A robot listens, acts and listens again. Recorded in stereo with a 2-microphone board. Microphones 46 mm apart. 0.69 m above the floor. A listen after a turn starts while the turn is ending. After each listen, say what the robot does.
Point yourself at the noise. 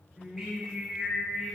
Turn 30° left.
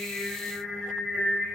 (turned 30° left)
Turn 125° left.
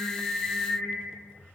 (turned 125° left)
Turn 15° right.
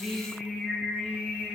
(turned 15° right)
Found it: singing, straight ahead.